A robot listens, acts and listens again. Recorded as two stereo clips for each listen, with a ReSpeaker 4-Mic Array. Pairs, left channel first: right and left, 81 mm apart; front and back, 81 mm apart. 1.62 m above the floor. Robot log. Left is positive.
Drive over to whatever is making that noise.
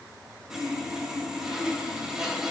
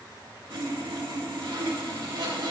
note: The sawing: 175° left.
cmd yaw +175
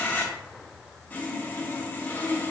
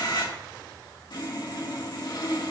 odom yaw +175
note: The sawing is now 25° right.
cmd yaw -25
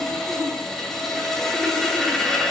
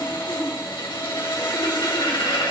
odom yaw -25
cmd fwd 1.0
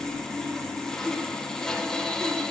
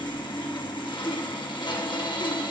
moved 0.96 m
note: The sawing is now 10° right.
cmd yaw -10
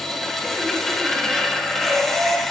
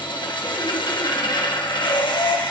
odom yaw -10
cmd fwd 1.0
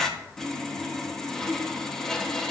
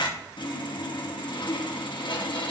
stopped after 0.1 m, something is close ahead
end: Arrived at the sawing, straight ahead.